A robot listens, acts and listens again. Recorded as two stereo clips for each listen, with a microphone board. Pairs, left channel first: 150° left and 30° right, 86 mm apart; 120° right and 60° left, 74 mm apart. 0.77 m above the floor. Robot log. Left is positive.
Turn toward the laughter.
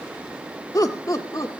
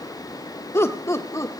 note: The laughter: 165° right.
cmd yaw -165
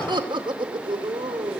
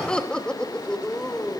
note: The laughter is now 40° right.
cmd yaw -40
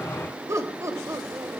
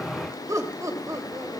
note: The laughter is now 20° left.
cmd yaw +20
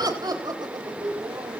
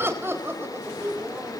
end: Facing the laughter, over 4 m away.